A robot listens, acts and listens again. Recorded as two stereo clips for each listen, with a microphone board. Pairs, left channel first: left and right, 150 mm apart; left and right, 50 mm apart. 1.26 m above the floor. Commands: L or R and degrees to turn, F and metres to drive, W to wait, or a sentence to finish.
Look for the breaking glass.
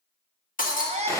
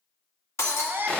L65
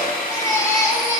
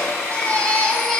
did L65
W
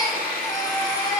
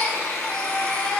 I heard breaking glass, but can't make it out now. It was about straight ahead or 50° left.